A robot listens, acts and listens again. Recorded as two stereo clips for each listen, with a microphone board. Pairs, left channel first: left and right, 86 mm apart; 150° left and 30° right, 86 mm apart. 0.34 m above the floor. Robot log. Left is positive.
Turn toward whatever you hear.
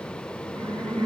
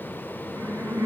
note: The laughter: 100° right.
cmd yaw -100
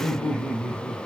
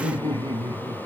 end: Facing the laughter.